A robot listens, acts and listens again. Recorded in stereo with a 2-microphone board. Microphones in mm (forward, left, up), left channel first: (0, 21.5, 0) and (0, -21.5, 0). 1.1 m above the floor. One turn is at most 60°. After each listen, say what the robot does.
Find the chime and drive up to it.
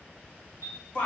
Turn 60° left.
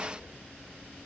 Keep listening.
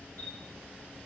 Turn 45° left.
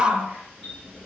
Drive 1.0 m forward.
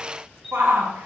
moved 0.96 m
Drive 1.0 m forward.
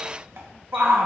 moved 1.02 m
Keep listening.
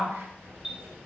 Turn 10° right.
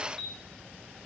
Drive 1.0 m forward.
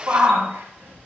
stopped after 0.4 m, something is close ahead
Keep listening.
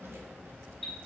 Arrived at the chime, straight ahead.